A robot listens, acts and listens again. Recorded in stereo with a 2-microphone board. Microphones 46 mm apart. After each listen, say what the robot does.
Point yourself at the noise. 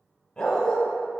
Turn 15° left.
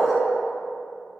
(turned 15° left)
Facing the dog barking.